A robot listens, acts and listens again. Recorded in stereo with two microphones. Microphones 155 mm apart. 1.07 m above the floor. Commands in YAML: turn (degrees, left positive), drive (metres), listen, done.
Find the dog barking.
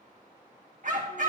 turn: -60
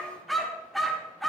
done: "Found it: a dog barking, straight ahead."